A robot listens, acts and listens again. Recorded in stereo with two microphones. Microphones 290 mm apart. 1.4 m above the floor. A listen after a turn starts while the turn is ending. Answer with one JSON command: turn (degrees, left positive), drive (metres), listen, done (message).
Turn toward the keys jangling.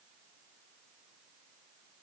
{"listen": true}
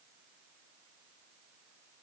{"listen": true}
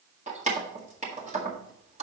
{"turn": -25}
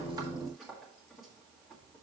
{"listen": true}
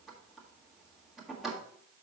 {"done": "Found it: keys jangling, straight ahead, 1 to 2 m away."}